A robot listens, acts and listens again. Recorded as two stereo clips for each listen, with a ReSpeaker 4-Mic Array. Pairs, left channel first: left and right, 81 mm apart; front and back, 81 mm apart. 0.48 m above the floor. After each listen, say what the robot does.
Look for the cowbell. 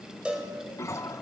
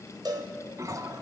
Turn 165° right.
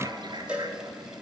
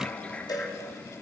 Turn 15° right.
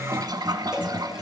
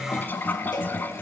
Keep listening.
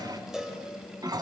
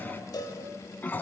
Found it: a cowbell, straight ahead.